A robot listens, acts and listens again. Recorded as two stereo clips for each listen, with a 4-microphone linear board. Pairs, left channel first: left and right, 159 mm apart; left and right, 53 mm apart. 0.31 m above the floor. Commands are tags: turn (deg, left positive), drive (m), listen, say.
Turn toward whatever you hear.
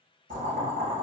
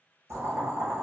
<turn deg="-55"/>
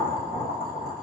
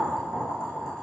<say>Found it: boiling, straight ahead, 1 to 2 m away.</say>